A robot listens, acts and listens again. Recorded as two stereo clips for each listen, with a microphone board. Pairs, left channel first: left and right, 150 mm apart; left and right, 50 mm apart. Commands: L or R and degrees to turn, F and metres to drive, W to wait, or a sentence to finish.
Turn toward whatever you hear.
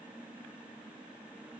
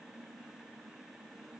W
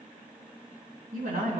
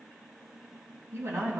R70
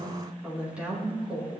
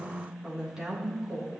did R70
R10
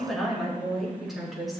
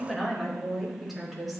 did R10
Facing the woman speaking, over 4 m away.